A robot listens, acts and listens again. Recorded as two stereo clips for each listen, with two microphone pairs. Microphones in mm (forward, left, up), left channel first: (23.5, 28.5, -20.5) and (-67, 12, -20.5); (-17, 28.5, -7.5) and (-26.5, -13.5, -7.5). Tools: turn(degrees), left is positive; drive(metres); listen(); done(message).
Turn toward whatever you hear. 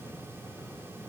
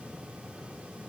listen()
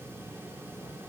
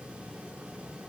listen()
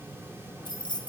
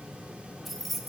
turn(degrees=-10)
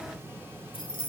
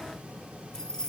done("Found it: keys jangling, straight ahead.")